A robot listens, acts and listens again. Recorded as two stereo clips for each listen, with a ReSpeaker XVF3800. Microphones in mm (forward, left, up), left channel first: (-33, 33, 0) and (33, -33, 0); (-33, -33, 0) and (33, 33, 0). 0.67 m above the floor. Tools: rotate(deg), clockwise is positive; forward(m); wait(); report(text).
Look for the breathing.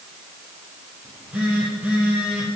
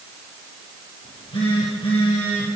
wait()
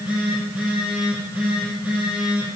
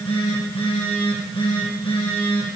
wait()
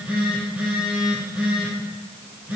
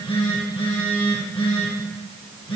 report("I can't make out breathing to turn to.")